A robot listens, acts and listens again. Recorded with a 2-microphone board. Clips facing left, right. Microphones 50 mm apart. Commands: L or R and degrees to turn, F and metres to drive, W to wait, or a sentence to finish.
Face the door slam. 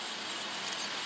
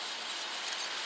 W
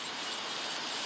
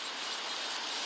W
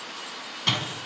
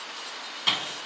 R30
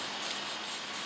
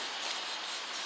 W
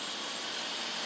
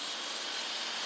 I heard a door slam, but can't make it out now. It was about 25° left or 145° right.